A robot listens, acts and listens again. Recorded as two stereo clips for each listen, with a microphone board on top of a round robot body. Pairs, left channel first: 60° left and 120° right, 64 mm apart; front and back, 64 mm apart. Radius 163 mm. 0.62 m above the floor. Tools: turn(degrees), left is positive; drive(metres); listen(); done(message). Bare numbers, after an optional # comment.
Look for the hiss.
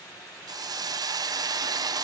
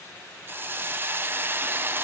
# The hiss: 125° right.
turn(-125)
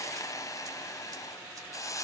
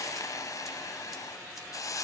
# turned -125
# The hiss is now 30° left.
turn(30)
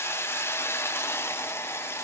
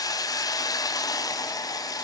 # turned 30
# The hiss is now 10° left.
turn(10)
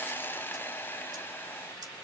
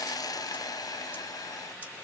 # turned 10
done("Facing the hiss, under 1 m away.")